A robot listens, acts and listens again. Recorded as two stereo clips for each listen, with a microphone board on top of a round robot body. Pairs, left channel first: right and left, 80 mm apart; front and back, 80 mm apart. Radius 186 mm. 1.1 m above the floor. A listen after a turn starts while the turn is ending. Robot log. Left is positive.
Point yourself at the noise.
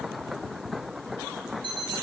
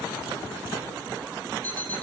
note: The alarm clock: 70° left.
cmd yaw +70
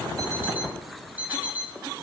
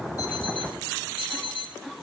note: The alarm clock is now 20° left.
cmd yaw +20
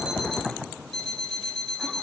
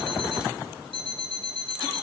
end: Facing the alarm clock, 2 to 4 m away.